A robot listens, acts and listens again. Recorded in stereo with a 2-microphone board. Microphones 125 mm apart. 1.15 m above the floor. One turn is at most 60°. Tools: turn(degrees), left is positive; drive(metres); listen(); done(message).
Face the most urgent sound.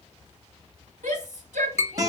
turn(degrees=-60)
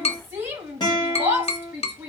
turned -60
turn(degrees=-15)
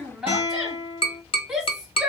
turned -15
done("Facing the shout.")